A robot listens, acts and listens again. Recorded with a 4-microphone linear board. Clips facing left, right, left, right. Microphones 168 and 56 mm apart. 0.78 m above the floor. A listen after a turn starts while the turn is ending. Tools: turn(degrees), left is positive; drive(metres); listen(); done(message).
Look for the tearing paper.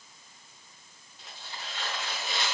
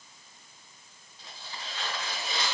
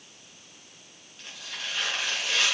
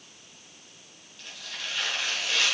turn(degrees=25)
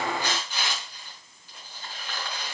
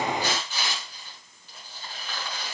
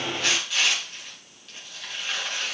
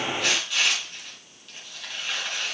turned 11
turn(degrees=10)
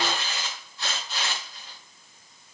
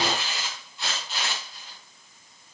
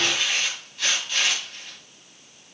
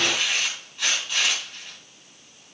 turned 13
done("Found it: tearing paper, straight ahead.")